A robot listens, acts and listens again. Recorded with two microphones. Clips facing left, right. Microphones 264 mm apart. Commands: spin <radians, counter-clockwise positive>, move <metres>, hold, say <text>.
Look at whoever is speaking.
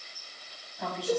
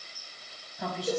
spin 0.52
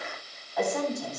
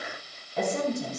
spin -0.61
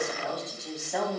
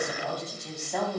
say Found it: a woman speaking, straight ahead, over 4 m away.